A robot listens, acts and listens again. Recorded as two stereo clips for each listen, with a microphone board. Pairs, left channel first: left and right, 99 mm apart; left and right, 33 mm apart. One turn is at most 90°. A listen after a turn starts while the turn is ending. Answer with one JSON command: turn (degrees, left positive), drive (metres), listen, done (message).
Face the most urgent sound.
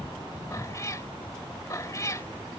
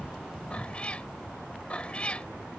{"listen": true}
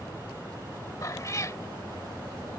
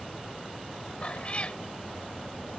{"listen": true}
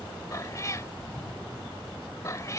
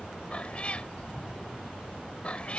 {"done": "I can't make out anything urgent, only a cat meowing."}